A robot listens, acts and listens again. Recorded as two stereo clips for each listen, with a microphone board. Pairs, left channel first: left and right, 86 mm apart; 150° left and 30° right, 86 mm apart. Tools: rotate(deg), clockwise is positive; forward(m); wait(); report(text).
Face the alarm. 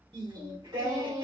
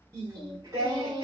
wait()
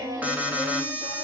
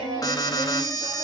rotate(165)
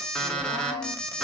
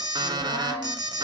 rotate(-10)
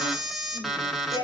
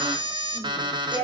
report("Facing the alarm.")